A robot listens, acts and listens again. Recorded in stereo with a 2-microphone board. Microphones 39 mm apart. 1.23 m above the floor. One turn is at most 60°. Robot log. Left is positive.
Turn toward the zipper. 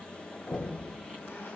cmd idle
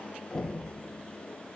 cmd idle
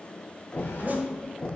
note: The zipper: about 45° right or 135° right.
cmd yaw -45
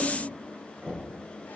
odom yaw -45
cmd idle
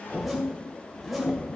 end: Facing the zipper.